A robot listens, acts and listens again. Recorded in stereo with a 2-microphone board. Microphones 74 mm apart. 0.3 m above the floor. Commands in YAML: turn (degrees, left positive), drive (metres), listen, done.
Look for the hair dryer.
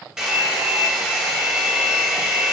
turn: -30
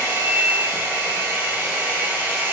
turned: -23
turn: -145
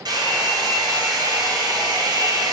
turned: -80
turn: -60
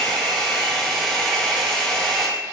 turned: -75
turn: 10
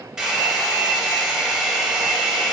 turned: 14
done: "Facing the hair dryer, 1 to 2 m away."